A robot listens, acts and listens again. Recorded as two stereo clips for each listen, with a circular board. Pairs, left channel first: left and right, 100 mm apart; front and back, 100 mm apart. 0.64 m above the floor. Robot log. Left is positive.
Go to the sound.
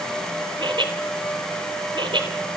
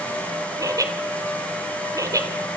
note: The laughter: 125° right.
cmd yaw -125
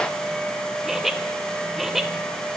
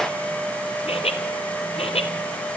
cmd fwd 1.0
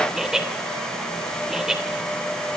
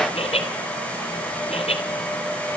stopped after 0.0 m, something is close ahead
end: Blocked. The laughter is further on, straight ahead.